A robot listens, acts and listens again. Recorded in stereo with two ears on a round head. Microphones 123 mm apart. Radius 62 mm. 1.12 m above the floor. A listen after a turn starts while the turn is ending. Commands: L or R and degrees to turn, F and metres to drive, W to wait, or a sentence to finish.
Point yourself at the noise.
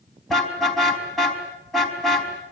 L30
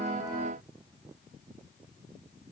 W
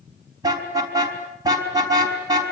R25
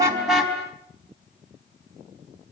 Found it: a car horn, straight ahead, over 4 m away.